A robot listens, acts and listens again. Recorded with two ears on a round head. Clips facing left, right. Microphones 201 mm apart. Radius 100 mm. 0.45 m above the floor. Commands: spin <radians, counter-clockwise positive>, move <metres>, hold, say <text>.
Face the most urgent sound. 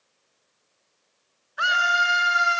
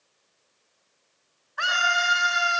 spin 0.52
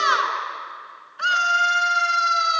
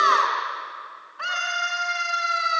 spin 2.53
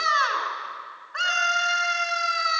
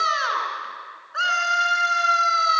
say Facing the scream.